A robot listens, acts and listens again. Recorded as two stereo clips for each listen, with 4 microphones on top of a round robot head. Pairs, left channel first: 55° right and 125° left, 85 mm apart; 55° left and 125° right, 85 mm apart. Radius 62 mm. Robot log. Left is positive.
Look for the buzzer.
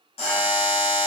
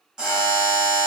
note: The buzzer: 45° right.
cmd yaw -45
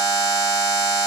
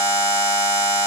end: Facing the buzzer.